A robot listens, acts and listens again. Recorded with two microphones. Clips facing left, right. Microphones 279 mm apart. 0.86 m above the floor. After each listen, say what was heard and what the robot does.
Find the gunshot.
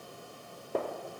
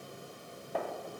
The gunshot: about 45° left or 135° left. Turn 45° left.
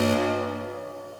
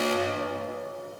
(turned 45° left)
Keep listening.
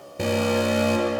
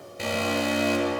I heard a gunshot, but can't make it out now. It was about straight ahead or 90° left.